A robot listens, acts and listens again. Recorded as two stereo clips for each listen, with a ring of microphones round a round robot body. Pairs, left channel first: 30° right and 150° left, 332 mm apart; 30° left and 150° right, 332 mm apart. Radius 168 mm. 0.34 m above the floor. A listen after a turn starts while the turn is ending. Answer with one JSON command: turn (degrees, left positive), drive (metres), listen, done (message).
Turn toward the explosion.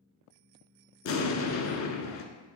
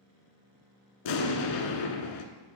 {"turn": 15}
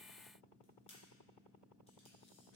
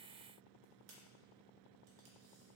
{"done": "Facing where the explosion came from. I can't hear it now."}